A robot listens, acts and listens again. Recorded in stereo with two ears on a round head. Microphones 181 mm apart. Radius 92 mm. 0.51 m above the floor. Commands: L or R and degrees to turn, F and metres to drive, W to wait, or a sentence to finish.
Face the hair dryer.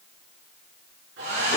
R60
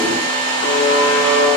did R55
R65
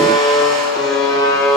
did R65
W
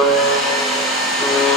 Found it: a hair dryer, straight ahead, over 4 m away.